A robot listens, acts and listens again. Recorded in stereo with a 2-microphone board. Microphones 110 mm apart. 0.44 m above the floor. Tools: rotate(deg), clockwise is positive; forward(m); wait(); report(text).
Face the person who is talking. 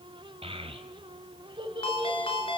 rotate(45)
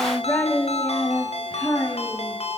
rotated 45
rotate(-25)
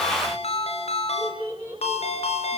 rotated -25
rotate(-10)
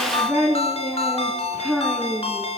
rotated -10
report("Facing the child speaking, over 4 m away.")